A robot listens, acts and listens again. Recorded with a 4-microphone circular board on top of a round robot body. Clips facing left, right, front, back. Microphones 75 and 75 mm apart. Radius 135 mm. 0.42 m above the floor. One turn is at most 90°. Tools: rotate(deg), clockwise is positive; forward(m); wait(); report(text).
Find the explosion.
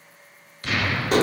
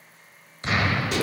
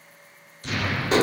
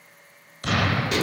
rotate(90)
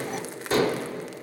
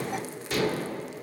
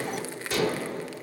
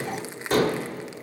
rotate(65)
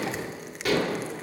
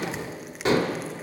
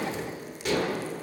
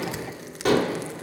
report("I heard an explosion from this way, but can't make it out now.")